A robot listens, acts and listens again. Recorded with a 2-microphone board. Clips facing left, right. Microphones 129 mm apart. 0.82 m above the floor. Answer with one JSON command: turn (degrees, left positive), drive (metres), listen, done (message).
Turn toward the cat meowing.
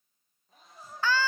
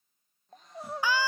{"turn": 30}
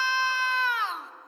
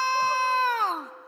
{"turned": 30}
{"listen": true}
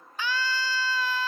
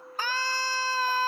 {"listen": true}
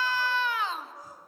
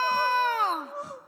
{"done": "I heard a cat meowing, but can't make it out now. It was about 25° right or 145° left."}